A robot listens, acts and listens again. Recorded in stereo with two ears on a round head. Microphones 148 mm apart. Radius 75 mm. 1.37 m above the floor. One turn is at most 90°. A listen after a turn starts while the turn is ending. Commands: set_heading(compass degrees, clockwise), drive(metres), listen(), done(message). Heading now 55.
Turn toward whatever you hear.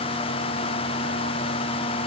listen()
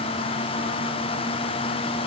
listen()
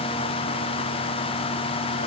done("I can't make out anything to turn to.")